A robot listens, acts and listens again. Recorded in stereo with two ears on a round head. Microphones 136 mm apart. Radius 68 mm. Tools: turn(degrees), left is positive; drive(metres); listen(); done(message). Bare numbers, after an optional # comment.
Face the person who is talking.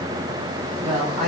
# The woman speaking: about 50° right or 130° right.
turn(-50)
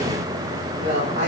# So it is at 80° right.
turn(-80)
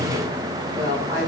# The woman speaking is now 25° right.
turn(-25)
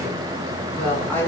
# The woman speaking is now 10° left.
turn(10)
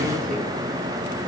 listen()
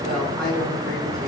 done("Facing the woman speaking.")